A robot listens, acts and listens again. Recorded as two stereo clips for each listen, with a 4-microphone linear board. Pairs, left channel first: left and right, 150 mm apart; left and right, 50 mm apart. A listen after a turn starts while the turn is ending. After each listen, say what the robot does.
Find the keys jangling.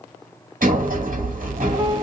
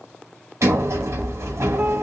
Keep listening.
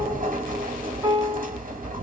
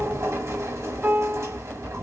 Keep listening.
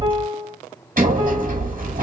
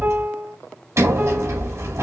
I can't make out keys jangling to turn to.